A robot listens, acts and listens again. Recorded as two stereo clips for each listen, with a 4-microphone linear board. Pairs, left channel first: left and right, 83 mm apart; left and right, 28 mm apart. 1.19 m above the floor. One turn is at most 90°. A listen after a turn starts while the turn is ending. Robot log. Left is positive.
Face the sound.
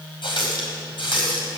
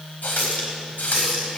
cmd yaw +90
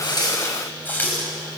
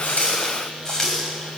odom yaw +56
note: So it is at 20° left.
cmd yaw +20
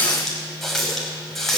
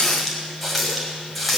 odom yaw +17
end: Facing the running tap, over 4 m away.